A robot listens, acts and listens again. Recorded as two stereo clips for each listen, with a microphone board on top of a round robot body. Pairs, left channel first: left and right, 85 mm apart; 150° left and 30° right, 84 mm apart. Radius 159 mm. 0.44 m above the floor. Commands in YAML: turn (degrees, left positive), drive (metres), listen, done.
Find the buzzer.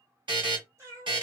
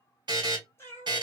turn: -65
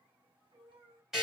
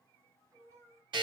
done: "Found it: a buzzer, straight ahead."